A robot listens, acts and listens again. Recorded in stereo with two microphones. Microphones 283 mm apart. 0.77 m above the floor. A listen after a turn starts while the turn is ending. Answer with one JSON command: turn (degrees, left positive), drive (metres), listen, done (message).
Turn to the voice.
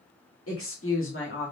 {"turn": 45}
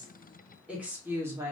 {"turn": -10}
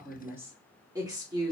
{"turn": -15}
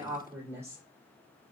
{"turn": -10}
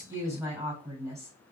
{"turn": -10}
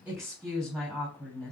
{"done": "Found it: a woman speaking, straight ahead, 2 to 4 m away."}